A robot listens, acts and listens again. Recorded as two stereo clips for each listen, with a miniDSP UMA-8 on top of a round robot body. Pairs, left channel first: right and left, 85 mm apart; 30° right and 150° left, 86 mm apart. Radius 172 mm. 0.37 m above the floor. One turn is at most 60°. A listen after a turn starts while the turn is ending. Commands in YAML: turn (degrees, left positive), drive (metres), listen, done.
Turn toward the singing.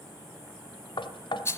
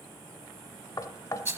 listen: true
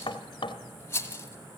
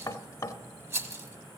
listen: true
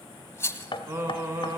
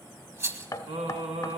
turn: 60
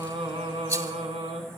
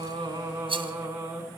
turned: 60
turn: 60
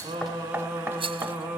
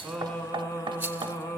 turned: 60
turn: 25
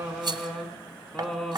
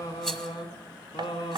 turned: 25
done: "Facing the singing, 1 to 2 m away."